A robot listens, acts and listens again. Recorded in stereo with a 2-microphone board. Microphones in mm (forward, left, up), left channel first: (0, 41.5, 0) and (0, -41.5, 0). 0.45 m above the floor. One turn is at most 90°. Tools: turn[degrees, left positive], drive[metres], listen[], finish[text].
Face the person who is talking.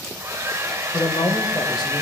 Thought: The man speaking: about 60° left or 120° left.
Action: turn[60]
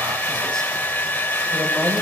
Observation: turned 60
Action: listen[]
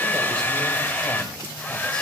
Action: listen[]
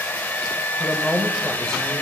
Thought: So it is at 10° left.
Action: turn[10]
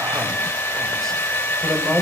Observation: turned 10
Action: finish[Facing the man speaking.]